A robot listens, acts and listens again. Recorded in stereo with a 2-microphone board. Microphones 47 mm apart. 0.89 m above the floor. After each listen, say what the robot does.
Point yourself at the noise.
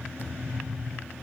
Turn 45° left.
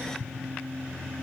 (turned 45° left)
Keep listening.
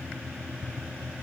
I heard a thud, but can't make it out now. It was about straight ahead or 90° left.